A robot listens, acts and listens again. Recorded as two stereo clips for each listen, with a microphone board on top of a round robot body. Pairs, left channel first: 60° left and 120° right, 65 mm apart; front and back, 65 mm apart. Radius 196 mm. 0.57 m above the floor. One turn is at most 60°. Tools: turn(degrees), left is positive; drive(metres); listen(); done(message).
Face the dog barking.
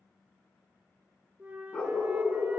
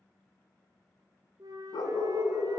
turn(degrees=-10)
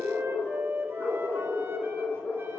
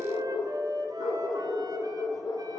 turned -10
done("Facing the dog barking, over 4 m away.")